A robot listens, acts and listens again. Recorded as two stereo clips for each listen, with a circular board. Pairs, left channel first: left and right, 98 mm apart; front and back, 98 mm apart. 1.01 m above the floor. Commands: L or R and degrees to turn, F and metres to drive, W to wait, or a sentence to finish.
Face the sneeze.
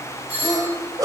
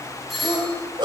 R140
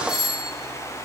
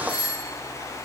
I heard a sneeze from this way, but can't make it out now.